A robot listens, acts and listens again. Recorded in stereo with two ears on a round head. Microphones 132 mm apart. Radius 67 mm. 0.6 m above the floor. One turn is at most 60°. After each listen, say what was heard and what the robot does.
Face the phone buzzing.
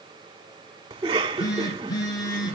The phone buzzing: about 30° left or 150° left. Turn 30° left.
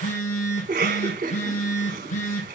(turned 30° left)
So it is at 125° left. Turn 60° left.
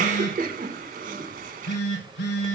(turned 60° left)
The phone buzzing is now 75° left. Turn 60° left.
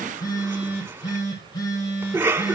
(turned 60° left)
The phone buzzing is now 25° left. Turn 25° left.
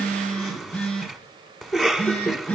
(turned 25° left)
The phone buzzing is now 10° left. Turn 10° left.
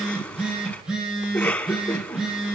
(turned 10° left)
Facing the phone buzzing.